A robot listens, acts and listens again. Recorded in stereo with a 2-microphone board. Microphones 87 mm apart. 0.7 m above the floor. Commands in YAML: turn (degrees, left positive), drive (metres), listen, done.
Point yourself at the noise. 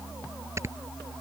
turn: -30
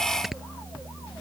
done: "Found it: snoring, straight ahead."